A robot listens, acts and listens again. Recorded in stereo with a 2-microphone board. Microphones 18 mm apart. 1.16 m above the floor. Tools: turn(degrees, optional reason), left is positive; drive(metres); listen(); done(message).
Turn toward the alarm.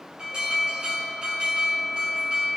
turn(degrees=-45, reason="The alarm: about 45° right or 135° right.")
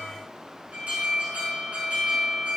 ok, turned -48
turn(degrees=-85, reason="So it is at 85° right.")
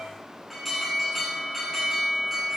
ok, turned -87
done("Facing the alarm.")